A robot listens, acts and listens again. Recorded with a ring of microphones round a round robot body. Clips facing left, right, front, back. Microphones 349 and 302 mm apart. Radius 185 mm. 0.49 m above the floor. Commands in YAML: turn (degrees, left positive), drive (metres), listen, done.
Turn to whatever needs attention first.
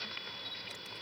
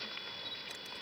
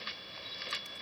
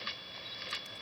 listen: true
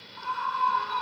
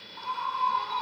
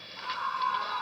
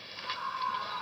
turn: 20
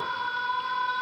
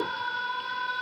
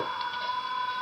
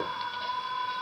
done: "Facing the scream."